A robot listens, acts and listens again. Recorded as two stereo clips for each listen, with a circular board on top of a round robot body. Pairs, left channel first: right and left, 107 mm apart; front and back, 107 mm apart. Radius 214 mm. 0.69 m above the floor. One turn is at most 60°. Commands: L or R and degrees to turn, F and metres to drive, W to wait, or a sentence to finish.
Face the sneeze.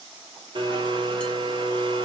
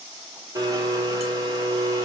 W
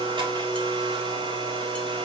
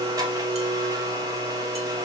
W
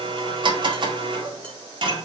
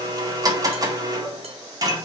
I can't make out a sneeze, only a blender.